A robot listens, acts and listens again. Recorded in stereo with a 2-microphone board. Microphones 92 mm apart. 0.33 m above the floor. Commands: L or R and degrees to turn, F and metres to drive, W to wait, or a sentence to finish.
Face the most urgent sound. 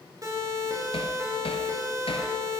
R35
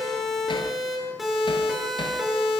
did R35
Facing the siren.